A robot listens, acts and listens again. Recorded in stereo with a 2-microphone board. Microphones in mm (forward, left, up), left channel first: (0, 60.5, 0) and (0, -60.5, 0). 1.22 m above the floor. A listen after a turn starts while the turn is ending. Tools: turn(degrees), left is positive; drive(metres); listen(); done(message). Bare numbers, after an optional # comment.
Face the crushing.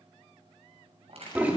# The crushing: about 55° right or 125° right.
turn(-55)
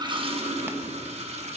listen()
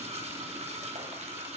listen()
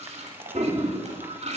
done("I heard crushing, but can't make it out now. It was about straight ahead or 70° right.")